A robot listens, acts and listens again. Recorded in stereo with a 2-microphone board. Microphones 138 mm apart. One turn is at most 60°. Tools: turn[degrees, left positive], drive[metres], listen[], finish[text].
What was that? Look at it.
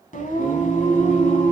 Thought: The singing: about 65° left or 115° left.
Action: turn[60]
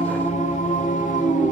Thought: So it is at 75° left.
Action: turn[60]
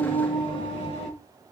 Thought: The singing is now 45° left.
Action: turn[45]
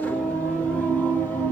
Thought: The singing is now 10° left.
Action: turn[10]
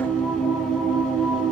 Action: finish[Found it: singing, straight ahead.]